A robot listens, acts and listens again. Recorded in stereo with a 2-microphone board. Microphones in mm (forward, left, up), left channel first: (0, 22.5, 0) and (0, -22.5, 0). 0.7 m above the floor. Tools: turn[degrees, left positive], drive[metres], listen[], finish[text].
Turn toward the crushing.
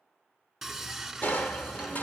Thought: The crushing: about 40° left or 140° left.
Action: turn[40]
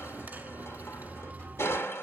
Thought: So it is at 100° left.
Action: turn[100]
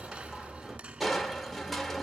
Action: finish[Facing the crushing, 1 to 2 m away.]